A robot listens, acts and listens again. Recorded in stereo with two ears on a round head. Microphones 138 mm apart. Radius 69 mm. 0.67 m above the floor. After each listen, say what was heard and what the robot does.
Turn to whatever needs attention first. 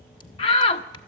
The shout: about 35° left or 145° left. Turn 35° left.
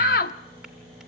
So it is at 100° left. Turn 100° left.
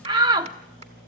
The shout is now 30° right. Turn 30° right.
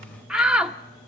Found it: a shout, straight ahead.